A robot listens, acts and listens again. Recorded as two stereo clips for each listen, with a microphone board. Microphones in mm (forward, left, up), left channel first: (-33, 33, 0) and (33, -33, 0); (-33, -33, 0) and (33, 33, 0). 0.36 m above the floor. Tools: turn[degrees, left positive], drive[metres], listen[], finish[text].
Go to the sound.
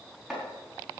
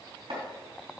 Thought: The chopping: 45° left.
Action: turn[45]
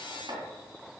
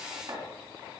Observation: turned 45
Action: drive[1.0]
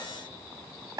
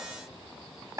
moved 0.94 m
Action: drive[1.0]
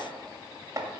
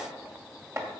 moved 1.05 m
Action: drive[1.0]
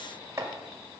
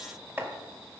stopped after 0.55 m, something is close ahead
Action: finish[Arrived at the chopping, straight ahead.]